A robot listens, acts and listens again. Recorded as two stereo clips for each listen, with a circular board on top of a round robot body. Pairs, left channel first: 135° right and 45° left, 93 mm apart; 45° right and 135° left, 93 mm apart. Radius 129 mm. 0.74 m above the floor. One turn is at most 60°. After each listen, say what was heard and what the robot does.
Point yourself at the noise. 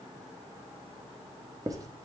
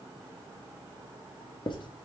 The writing: 10° right. Turn 10° right.
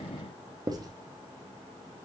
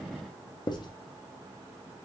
Facing the writing.